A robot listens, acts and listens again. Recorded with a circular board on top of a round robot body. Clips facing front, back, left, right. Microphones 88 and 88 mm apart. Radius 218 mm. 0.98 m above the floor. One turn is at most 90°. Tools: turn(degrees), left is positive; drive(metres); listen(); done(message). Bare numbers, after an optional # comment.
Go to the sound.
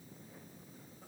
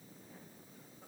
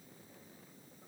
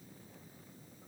listen()
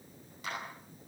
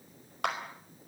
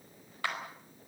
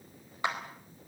# The clap: 160° right.
turn(-90)
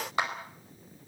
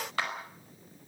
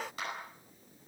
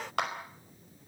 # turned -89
# The clap is now 70° right.
turn(-70)
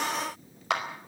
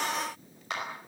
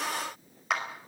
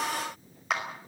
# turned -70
drive(1.0)
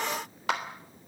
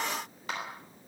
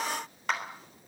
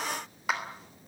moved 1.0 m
drive(1.0)
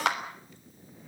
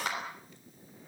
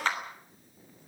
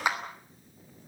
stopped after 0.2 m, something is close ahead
# The clap is now 15° right.
turn(-15)
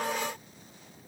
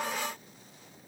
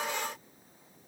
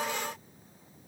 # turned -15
listen()
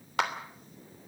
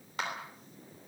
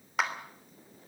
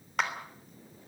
done("Something is in my way. I am facing the clap but have not reached it.")